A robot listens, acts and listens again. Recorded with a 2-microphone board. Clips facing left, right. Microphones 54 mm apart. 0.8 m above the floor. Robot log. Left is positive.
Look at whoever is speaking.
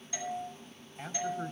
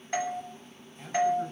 note: The man speaking: about 35° left or 145° left.
cmd yaw +35
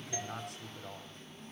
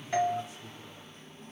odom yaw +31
note: So it is at 115° left.
cmd yaw +115
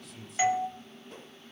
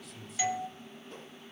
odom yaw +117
end: Found it: a man speaking, straight ahead.